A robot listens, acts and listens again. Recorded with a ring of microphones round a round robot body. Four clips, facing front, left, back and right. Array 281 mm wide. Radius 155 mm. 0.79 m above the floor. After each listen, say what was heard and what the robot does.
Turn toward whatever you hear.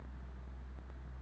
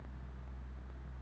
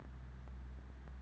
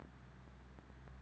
Keep listening.
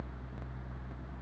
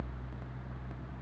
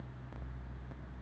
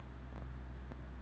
Keep listening.
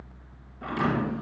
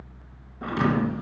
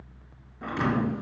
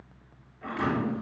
The thud: 95° left. Turn 95° left.
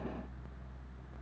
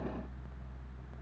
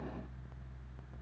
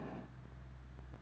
Facing where the thud came from. I can't hear it now.